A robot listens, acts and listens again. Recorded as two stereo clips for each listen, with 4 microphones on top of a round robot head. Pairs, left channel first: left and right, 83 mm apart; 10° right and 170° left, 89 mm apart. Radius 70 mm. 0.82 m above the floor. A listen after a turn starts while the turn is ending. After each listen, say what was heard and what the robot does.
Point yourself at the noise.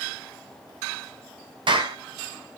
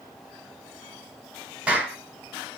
The clap: 110° right. Turn 110° right.
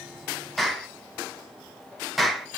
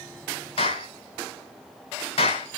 Facing the clap, 2 to 4 m away.